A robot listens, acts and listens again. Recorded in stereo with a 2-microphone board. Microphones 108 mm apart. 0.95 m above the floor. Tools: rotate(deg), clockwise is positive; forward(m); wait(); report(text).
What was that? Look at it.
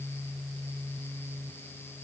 wait()
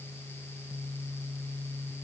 wait()
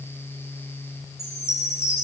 rotate(-25)
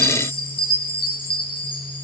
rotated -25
rotate(-130)
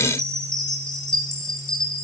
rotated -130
report("Facing the chime.")